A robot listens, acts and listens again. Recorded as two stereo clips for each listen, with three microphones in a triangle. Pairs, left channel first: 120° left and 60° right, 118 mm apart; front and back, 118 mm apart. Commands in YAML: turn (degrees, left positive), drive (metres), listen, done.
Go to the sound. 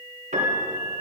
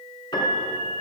turn: -55
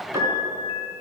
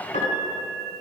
drive: 1.0
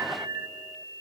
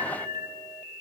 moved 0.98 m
turn: 15
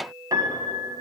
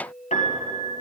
drive: 1.0
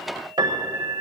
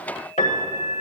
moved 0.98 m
drive: 1.0
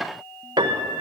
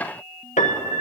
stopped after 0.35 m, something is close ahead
turn: -10
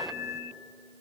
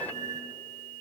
done: "I am next to the piano."